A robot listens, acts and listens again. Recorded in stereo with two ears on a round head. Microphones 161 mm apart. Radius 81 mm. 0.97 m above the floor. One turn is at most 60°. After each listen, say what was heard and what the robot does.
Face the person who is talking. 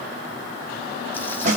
Keep listening.
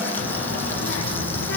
The child speaking: about 70° left or 110° left. Turn 60° left.
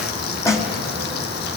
So it is at 50° left. Turn 50° left.
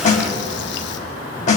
The child speaking is now 25° left. Turn 25° left.
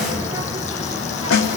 The child speaking is now 15° right. Turn 15° right.
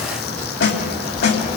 Found it: a child speaking, straight ahead, 2 to 4 m away.